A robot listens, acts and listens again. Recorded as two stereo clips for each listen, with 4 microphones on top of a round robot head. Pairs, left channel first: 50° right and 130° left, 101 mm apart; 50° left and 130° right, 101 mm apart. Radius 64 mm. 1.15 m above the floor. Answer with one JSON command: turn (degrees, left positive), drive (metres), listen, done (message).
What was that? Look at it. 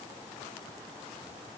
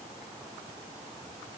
{"listen": true}
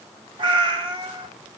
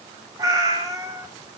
{"turn": 170}
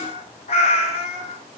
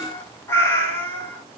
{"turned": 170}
{"turn": -20}
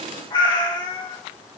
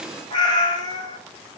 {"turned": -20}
{"done": "Facing the cat meowing, 2 to 4 m away."}